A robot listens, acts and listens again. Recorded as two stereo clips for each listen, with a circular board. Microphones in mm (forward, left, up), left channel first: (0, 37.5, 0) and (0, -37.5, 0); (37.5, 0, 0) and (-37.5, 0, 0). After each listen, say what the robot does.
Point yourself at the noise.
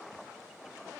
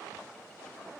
Keep listening.
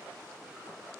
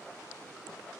Keep listening.
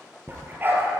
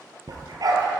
Turn 150° right.
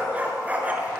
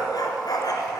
Turn 25° right.
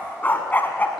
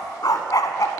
Turn 25° left.
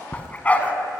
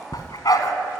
Turn 20° left.
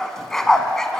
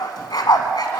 Found it: a dog barking, straight ahead.